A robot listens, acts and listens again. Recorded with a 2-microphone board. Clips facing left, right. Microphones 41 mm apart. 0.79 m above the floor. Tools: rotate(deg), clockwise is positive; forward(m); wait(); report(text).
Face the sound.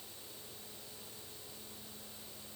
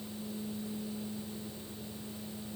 wait()
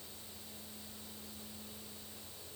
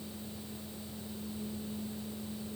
wait()
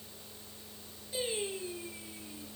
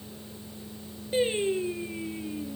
rotate(40)
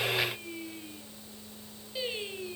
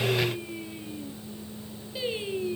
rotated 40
report("Facing the singing.")